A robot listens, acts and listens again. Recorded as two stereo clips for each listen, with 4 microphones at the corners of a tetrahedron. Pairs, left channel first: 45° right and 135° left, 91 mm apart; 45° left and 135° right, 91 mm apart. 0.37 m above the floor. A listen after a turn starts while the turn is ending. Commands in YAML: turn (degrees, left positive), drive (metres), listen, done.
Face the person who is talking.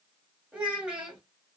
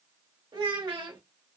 turn: -150
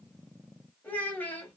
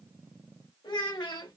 turn: 20
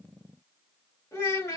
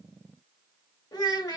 done: "Facing the child speaking."